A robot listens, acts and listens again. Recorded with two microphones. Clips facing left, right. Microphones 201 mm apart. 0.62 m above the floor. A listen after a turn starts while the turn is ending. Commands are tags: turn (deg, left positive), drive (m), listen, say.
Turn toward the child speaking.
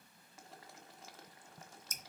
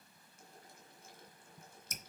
<listen/>
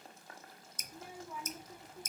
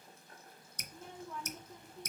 <turn deg="30"/>
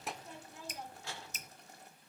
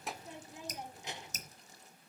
<turn deg="-20"/>
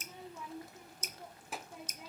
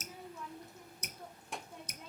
<say>Found it: a child speaking, straight ahead, under 1 m away.</say>